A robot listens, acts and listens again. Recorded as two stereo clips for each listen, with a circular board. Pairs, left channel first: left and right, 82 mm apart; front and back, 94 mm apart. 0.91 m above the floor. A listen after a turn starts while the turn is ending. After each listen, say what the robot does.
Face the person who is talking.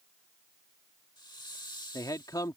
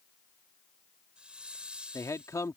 Turn 55° left.
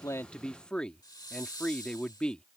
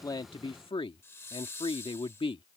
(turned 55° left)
Turn 15° left.
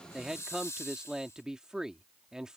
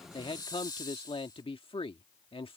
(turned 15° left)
Turn 10° right.
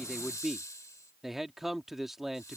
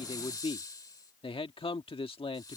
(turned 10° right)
Facing the man speaking.